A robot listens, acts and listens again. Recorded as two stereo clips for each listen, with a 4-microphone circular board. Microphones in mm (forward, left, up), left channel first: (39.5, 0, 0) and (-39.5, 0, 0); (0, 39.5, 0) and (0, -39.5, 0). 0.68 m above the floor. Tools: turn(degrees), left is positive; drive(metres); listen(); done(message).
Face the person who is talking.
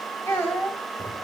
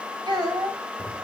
turn(degrees=-65)
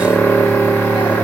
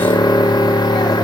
listen()
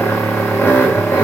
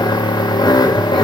listen()
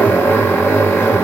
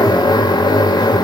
done("I heard a child speaking from this way, but can't make it out now.")